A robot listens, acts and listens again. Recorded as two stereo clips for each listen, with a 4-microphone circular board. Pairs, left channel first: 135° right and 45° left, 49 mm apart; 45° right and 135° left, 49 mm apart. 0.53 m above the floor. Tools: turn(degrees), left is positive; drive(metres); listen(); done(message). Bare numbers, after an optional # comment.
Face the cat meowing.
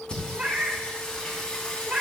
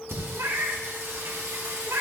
# The cat meowing: 110° left.
turn(110)
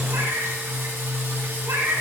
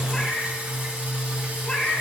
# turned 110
# The cat meowing is now 30° left.
turn(30)
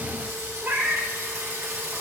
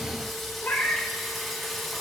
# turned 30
done("Found it: a cat meowing, straight ahead, 1 to 2 m away.")